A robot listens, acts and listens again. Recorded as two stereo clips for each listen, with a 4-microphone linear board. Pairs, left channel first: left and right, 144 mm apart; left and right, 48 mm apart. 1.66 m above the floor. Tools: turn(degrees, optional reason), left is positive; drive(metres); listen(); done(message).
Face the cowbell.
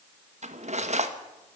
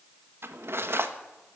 listen()
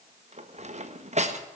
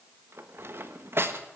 listen()
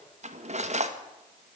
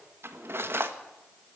done("I can't make out a cowbell to turn to.")